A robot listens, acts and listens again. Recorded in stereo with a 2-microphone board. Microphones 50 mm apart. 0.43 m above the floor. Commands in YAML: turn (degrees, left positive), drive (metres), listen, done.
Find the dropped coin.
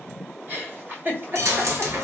turn: -65
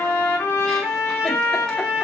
listen: true
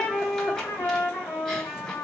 done: "I heard a dropped coin, but can't make it out now. It was about straight ahead or 50° right."